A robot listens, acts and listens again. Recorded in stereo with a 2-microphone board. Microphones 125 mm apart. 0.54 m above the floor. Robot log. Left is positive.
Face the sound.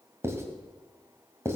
note: The writing: about 20° right or 160° right.
cmd yaw -20
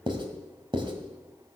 note: So it is at 135° right.
cmd yaw -135
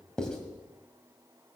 end: Found it: writing, straight ahead.